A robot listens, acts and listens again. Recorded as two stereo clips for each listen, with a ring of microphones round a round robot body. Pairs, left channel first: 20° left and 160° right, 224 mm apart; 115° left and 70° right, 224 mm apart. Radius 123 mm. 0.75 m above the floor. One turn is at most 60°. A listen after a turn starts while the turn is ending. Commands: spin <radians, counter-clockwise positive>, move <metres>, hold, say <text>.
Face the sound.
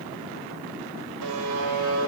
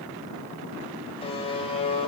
spin 1.05
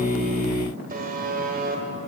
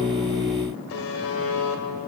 spin 1.05
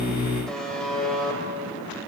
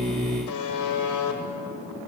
spin 1.05
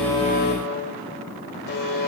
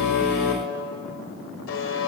spin 1.05
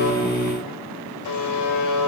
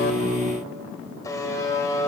spin 0.61
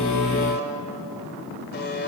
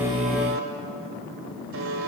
spin -0.52
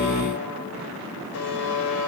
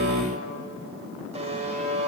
say Facing the buzzer.